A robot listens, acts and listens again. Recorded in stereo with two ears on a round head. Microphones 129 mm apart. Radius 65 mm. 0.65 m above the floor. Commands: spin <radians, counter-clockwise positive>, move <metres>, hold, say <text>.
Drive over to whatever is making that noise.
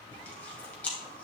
spin 0.52
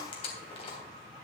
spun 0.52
spin 2.44
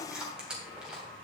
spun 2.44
move 1.0
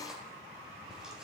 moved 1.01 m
move 1.0
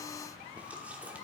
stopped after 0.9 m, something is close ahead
hold
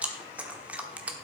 spin -0.17
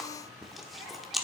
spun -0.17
say I am next to the chewing.